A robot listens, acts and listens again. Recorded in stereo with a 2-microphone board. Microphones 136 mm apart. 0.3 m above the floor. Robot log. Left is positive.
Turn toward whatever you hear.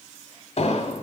note: The explosion: about 55° left or 125° left.
cmd yaw +55
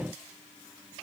cmd idle
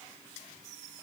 end: I heard an explosion, but can't make it out now. It was about straight ahead or 70° left.